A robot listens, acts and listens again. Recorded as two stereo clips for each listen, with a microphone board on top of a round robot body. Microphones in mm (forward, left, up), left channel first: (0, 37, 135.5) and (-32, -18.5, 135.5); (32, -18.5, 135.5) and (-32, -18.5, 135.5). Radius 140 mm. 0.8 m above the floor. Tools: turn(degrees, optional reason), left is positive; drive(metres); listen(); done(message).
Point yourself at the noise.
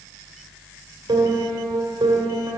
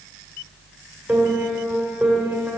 turn(degrees=-105, reason="The piano: 105° right.")
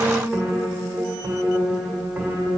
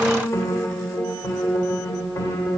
turn(degrees=-45, reason="The piano is now 45° right.")
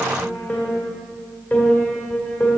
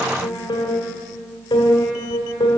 done("Found it: a piano, straight ahead, 1 to 2 m away.")